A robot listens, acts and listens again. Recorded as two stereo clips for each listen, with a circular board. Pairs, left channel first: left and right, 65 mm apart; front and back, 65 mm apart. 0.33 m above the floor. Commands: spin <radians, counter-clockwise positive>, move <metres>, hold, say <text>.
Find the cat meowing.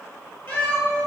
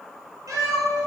spin 2.53
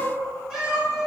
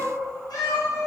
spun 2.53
spin -0.26
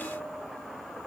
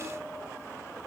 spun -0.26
hold
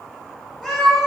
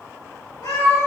say Found it: a cat meowing, straight ahead, 2 to 4 m away.